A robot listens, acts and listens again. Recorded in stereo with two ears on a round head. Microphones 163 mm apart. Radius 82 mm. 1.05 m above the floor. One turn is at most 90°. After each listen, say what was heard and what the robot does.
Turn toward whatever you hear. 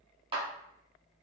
The clap: about 30° right or 150° right. Turn 30° right.
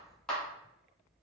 Found it: a clap, straight ahead, 1 to 2 m away.